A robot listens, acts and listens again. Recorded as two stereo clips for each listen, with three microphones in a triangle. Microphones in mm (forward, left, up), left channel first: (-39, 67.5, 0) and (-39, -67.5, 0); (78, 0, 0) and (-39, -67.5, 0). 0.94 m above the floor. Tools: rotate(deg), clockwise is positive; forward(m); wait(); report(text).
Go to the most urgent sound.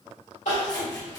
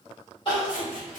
rotate(-80)
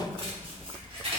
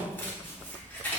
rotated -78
wait()
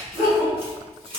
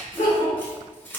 forward(1.0)
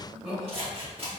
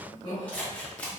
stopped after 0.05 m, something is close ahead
report("Something is in my way. I am facing the crying but have not reached it.")